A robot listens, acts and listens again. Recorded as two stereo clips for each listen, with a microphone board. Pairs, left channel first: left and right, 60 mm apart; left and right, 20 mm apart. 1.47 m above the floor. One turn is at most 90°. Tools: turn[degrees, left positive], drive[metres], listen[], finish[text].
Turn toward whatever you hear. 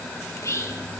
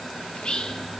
Thought: The whispering: about 50° left or 130° left.
Action: turn[50]
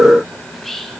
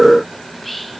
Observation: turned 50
Action: finish[Facing the whispering, 2 to 4 m away.]